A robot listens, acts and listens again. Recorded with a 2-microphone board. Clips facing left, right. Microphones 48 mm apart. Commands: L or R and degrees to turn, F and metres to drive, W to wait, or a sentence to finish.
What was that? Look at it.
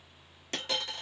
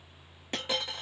R15
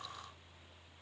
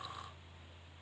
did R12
W
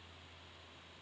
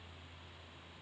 I heard a dropped coin, but can't make it out now. It was about 5° right or 150° right.